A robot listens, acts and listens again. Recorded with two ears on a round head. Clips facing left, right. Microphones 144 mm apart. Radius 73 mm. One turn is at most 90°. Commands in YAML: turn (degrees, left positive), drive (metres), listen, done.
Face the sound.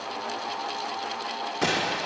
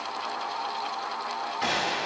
turn: 60
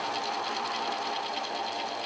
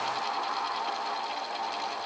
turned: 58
listen: true
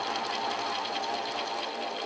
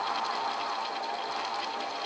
done: "I heard a gunshot, but can't make it out now. It was about straight ahead or 60° left."